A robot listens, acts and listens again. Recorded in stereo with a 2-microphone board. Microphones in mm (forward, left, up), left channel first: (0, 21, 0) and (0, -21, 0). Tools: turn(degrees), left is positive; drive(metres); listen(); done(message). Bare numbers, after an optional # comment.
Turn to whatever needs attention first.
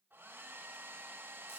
listen()
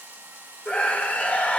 # The scream: about 35° left or 145° left.
turn(35)
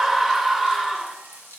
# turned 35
done("Facing the scream, 1 to 2 m away.")